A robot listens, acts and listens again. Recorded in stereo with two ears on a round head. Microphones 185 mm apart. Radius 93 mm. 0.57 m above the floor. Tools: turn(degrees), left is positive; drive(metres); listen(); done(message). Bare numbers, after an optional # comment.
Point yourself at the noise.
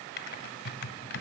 # The typing on a keyboard: about 50° left or 130° left.
turn(50)
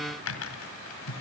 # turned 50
# So it is at 75° left.
turn(75)
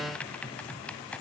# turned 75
done("Facing the typing on a keyboard, 2 to 4 m away.")